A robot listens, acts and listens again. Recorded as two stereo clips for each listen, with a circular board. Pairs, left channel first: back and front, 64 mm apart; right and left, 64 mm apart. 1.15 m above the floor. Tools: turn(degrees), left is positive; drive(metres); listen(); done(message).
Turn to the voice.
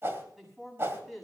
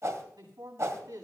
turn(degrees=90)
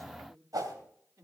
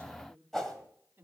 turn(degrees=35)
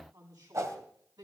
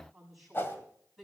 done("Facing the man speaking, over 4 m away.")